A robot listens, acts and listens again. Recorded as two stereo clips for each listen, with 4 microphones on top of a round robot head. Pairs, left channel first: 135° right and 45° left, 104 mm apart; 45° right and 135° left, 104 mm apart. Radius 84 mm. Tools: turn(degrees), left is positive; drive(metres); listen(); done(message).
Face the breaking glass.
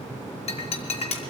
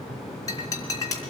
turn(degrees=-110)
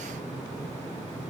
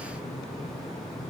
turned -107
done("I heard breaking glass from this way, but can't make it out now.")